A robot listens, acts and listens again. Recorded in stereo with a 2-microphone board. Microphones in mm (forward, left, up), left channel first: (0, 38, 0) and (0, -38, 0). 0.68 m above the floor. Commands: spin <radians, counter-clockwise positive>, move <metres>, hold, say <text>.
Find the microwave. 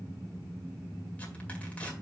hold
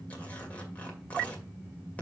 hold
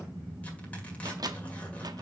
spin -1.05
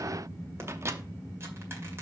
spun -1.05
spin -0.79
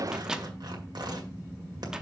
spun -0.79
spin -0.17
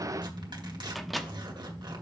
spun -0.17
say Found it: a microwave, straight ahead.